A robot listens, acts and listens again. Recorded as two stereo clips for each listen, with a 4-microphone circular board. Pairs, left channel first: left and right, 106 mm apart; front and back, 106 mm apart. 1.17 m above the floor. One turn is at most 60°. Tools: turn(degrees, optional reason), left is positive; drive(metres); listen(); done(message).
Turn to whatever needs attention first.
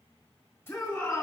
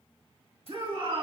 turn(degrees=60, reason="The shout: 150° left.")
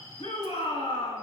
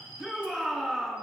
turn(degrees=60, reason="The shout is now 90° left.")
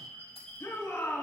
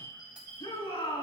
turn(degrees=25, reason="The shout is now 25° left.")
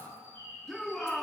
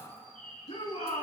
done("Facing the shout.")